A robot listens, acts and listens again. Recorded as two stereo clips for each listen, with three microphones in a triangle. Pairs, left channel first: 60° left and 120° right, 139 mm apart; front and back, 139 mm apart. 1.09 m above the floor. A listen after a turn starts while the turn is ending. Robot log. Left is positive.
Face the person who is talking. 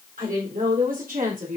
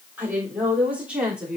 note: The woman speaking: 95° right.
cmd yaw -95
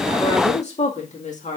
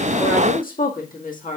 note: The woman speaking is now 25° left.
cmd yaw +25
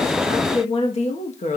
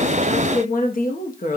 note: The woman speaking is now 25° left.
cmd yaw +25
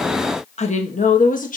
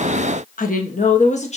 note: The woman speaking is now 40° left.
cmd yaw +40
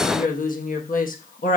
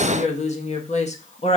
note: The woman speaking is now 40° left.
cmd yaw +40
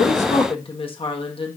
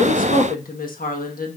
end: Facing the woman speaking.